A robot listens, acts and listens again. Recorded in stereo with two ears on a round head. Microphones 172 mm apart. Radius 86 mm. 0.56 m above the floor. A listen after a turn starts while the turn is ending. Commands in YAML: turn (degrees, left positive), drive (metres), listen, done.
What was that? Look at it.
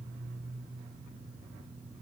listen: true
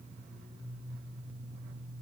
listen: true
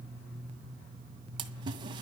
turn: -25
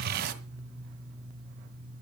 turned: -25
turn: -130
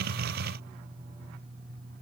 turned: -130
done: "Facing where the splash came from. I can't hear it now."